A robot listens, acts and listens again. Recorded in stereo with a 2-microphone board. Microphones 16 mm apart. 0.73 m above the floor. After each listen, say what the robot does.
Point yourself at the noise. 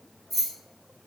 Turn 30° left.
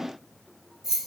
Turn 30° right.
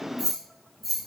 Facing the keys jangling, 1 to 2 m away.